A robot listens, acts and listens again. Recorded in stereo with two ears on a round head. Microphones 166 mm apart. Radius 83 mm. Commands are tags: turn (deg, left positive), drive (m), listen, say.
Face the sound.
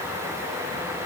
<listen/>
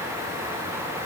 <listen/>
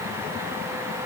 <say>I can't make out anything to turn to.</say>